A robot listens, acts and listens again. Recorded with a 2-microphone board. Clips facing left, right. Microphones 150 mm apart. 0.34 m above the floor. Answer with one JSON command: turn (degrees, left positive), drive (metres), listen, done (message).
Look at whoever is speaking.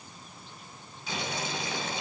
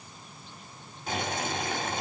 {"listen": true}
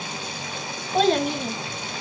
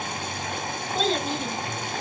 {"turn": 60}
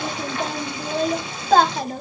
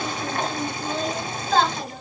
{"turn": 55}
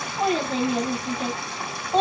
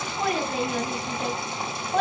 {"turn": 25}
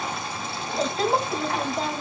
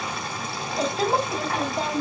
{"done": "Facing the child speaking."}